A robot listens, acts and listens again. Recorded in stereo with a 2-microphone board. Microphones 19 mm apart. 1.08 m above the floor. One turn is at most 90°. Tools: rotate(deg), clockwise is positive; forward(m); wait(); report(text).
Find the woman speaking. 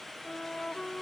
wait()
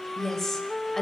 rotate(-20)
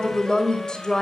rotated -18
rotate(-40)
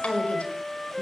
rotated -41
rotate(-90)
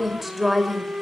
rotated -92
report("Found it: a woman speaking, straight ahead.")